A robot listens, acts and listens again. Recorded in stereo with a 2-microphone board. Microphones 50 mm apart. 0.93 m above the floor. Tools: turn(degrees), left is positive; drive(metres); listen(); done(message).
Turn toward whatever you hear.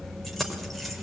turn(degrees=30)
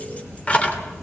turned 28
turn(degrees=155)
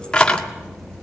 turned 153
turn(degrees=20)
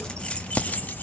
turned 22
turn(degrees=30)
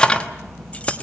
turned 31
turn(degrees=25)
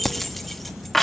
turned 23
done("Found it: keys jangling, straight ahead.")